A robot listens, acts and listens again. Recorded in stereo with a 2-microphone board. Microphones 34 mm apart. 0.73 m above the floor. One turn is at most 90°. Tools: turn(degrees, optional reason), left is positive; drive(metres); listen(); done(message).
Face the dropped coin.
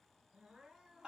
listen()
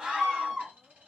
turn(degrees=-65, reason="The dropped coin: about 65° right or 115° right.")
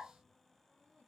listen()
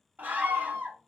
done("I heard a dropped coin, but can't make it out now. It was about straight ahead or 50° right.")